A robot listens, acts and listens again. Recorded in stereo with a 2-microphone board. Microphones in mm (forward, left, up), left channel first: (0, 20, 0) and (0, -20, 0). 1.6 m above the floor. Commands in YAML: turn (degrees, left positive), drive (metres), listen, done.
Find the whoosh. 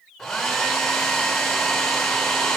listen: true
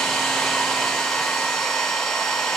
listen: true
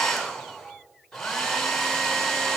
done: "I can't make out a whoosh to turn to."